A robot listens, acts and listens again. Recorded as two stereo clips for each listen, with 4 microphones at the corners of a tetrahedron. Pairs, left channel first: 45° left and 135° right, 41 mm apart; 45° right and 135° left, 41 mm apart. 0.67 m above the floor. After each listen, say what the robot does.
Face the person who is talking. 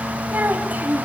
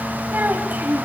Turn 180° left.
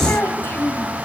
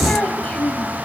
Turn 15° left.
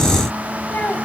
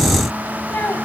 Found it: a child speaking, straight ahead.